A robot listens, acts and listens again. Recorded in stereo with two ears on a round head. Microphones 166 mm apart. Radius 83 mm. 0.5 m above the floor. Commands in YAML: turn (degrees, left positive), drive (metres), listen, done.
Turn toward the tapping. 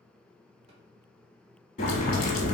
listen: true
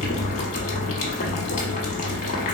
listen: true
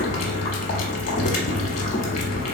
done: "I can't make out tapping, only boiling."